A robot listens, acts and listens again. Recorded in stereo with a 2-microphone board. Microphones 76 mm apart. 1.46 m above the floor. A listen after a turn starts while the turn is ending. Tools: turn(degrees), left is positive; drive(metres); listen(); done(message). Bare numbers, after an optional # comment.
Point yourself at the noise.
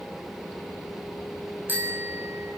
# The bicycle bell: about 25° right or 155° right.
turn(-25)
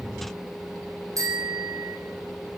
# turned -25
# So it is at 130° right.
turn(-130)
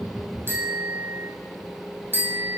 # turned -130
# The bicycle bell is now 25° right.
turn(-25)
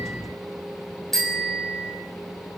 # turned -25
done("Facing the bicycle bell.")